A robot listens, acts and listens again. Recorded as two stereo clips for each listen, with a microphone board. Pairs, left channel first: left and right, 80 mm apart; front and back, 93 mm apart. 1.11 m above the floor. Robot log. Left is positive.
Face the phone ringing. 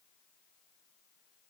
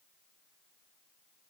cmd idle
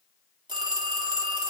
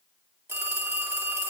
note: The phone ringing: 115° right.
cmd yaw -115
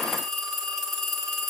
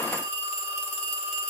end: Facing the phone ringing, 2 to 4 m away.